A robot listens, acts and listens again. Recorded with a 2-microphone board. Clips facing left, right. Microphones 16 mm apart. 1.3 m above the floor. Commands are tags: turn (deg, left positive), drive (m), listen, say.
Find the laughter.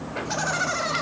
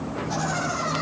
<turn deg="30"/>
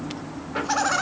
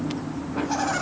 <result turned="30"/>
<turn deg="125"/>
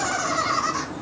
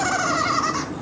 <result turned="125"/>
<say>Facing the laughter, over 4 m away.</say>